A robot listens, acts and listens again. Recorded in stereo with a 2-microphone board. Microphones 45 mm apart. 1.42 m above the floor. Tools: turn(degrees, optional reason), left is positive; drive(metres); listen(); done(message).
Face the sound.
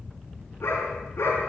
turn(degrees=90)
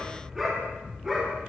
done("Found it: a dog barking, straight ahead, over 4 m away.")